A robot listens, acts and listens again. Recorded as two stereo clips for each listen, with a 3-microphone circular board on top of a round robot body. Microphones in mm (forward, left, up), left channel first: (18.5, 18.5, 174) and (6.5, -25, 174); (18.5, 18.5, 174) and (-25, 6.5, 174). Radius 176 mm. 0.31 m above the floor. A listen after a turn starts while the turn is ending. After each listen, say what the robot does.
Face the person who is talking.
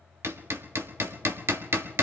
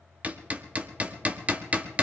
Keep listening.
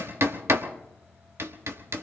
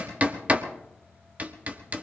Keep listening.
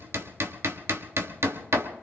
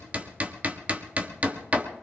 I can't make out anyone speaking to turn to.